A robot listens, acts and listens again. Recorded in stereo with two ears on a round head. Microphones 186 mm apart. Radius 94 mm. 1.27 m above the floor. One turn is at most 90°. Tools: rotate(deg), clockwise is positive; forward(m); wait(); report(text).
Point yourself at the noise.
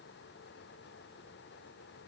wait()
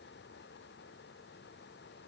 wait()
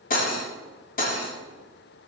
rotate(-40)
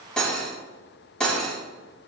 report("Found it: cutlery clinking, straight ahead.")